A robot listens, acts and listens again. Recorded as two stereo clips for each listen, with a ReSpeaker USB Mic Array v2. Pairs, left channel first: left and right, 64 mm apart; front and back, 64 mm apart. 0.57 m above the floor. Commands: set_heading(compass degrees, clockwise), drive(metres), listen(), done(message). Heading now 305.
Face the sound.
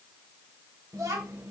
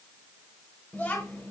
set_heading(5)
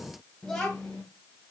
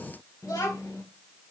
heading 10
set_heading(0)
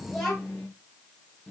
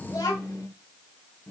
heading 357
done("Found it: a child speaking, straight ahead, 2 to 4 m away.")